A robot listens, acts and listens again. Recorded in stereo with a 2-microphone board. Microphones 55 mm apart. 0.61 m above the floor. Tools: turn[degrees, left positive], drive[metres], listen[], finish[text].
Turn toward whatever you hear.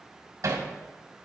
Thought: The hammering: about 75° right or 105° right.
Action: turn[-75]
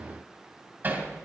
Thought: So it is at 35° right.
Action: turn[-35]
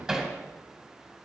Action: finish[Facing the hammering.]